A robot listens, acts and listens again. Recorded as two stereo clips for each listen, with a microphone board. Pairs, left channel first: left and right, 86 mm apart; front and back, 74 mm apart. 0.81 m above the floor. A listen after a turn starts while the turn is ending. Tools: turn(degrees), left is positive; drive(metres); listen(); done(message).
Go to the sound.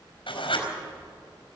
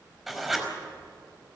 turn(degrees=90)
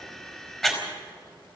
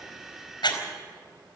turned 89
drive(metres=1.0)
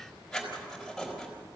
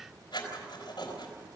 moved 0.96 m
drive(metres=1.0)
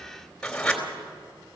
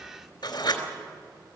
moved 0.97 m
turn(degrees=10)
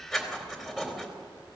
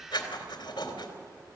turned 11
drive(metres=1.0)
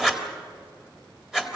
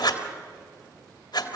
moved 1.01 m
drive(metres=1.0)
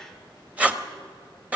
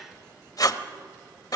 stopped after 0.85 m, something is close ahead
turn(degrees=-20)
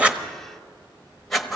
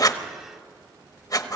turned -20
done("Arrived at the writing, straight ahead.")